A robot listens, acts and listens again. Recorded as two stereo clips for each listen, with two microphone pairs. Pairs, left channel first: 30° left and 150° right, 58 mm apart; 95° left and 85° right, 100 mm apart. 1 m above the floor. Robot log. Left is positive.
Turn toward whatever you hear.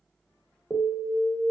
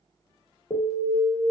note: The alarm: 110° left.
cmd yaw +110
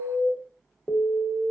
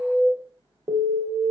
note: The alarm is now 20° right.
cmd yaw -20
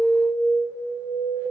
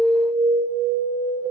end: Facing the alarm.